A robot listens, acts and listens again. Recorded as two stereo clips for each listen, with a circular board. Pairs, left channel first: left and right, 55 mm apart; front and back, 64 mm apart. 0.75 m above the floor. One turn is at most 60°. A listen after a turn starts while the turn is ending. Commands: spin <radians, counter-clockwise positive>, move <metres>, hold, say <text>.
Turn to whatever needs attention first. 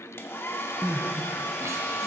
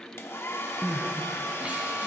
spin -1.05
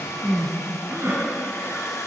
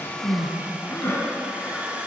spin -0.87
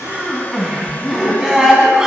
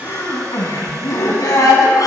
spin -0.26
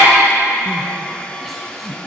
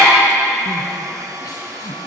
say Facing the crying.